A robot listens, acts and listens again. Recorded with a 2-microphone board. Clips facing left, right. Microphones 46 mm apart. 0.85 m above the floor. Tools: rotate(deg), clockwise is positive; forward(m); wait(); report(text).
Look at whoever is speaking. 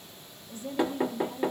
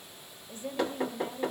rotate(25)
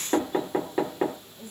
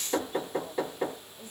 report("Found it: a woman speaking, straight ahead, 1 to 2 m away.")